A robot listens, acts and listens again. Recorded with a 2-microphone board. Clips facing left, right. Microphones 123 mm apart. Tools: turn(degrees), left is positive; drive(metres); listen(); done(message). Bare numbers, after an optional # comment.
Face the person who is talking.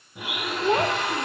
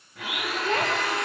# The child speaking: about 25° left or 155° left.
turn(25)
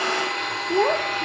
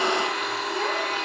# So it is at 125° left.
turn(125)
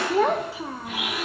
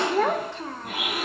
# The child speaking is now 10° left.
turn(10)
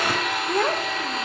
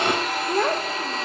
done("Found it: a child speaking, straight ahead.")